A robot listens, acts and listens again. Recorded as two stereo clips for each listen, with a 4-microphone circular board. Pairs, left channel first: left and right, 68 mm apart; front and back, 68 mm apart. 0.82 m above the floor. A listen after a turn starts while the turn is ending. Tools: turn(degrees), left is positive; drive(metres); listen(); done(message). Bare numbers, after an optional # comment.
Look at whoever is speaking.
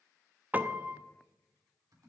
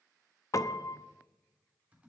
listen()
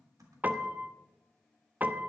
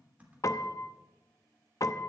listen()
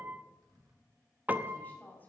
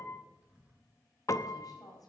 # The woman speaking: 25° left.
turn(25)
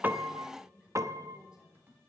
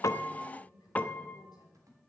# The woman speaking is now 15° right.
turn(-15)
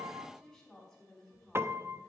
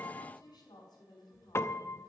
done("Found it: a woman speaking, straight ahead, over 4 m away.")